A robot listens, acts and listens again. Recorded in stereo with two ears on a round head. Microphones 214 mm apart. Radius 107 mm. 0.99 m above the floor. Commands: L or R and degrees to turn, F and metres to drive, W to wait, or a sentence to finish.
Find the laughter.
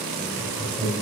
L30
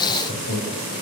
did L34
L140
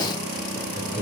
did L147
R15
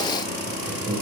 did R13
R10
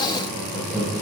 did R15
Found it: laughter, straight ahead.